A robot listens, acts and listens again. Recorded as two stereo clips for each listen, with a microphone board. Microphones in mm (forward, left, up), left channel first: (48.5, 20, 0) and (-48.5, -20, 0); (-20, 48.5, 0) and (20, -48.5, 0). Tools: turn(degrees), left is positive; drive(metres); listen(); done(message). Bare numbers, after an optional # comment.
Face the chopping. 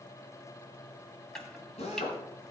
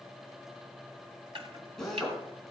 # The chopping: 60° right.
turn(-60)
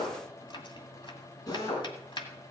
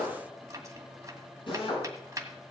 # The chopping is now 10° right.
turn(-10)
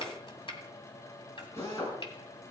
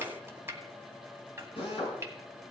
done("Found it: chopping, straight ahead, 1 to 2 m away.")